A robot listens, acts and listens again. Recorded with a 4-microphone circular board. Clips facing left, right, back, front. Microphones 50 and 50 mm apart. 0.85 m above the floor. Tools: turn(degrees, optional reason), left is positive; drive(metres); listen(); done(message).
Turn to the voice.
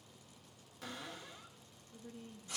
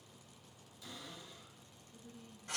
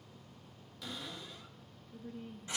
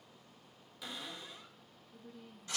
turn(degrees=130, reason="The woman speaking: 130° left.")
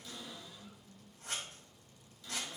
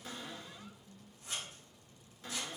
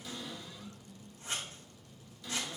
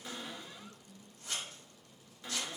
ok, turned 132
done("Found it: a woman speaking, straight ahead.")